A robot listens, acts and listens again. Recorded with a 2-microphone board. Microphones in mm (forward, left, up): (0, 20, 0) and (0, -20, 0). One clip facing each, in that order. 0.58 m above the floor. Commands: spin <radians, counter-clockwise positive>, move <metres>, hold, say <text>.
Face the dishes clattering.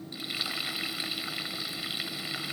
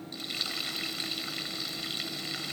hold
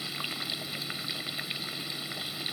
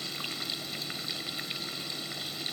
hold
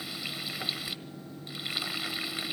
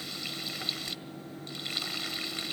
say I can't make out dishes clattering to turn to.